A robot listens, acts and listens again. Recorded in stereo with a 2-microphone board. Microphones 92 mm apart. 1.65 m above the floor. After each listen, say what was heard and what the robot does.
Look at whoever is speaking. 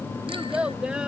Turn 30° right.
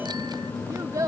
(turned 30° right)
So it is at 135° right. Turn 135° right.
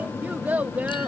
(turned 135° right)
The child speaking is now 20° right. Turn 20° right.
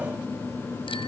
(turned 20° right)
Keep listening.
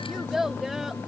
Found it: a child speaking, straight ahead.